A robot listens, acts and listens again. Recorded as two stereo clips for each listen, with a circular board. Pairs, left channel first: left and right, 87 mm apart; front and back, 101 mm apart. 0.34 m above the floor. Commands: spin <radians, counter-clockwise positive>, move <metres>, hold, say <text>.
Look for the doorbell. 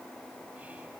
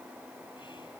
hold
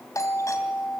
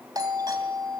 spin 2.36
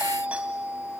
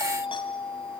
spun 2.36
spin -0.26
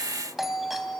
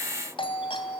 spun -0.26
say Found it: a doorbell, straight ahead, 2 to 4 m away.